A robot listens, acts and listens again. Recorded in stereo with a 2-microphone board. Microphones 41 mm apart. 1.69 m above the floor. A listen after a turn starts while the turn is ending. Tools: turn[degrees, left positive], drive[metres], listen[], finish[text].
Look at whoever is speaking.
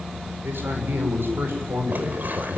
Thought: The man speaking: about 70° right or 110° right.
Action: turn[-70]
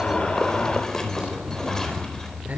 Thought: So it is at 40° right.
Action: turn[-40]
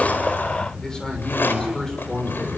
Thought: The man speaking is now 15° left.
Action: turn[15]
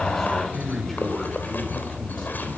Action: finish[Facing the man speaking.]